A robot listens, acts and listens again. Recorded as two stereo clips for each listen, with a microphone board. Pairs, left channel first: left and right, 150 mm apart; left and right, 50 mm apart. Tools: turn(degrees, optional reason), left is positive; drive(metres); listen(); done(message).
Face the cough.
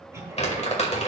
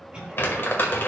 turn(degrees=-20, reason="The cough: about 20° right or 160° right.")
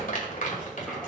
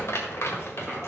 listen()
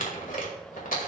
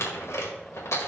listen()
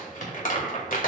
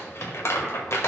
done("I heard a cough, but can't make it out now. It was about straight ahead or 140° right.")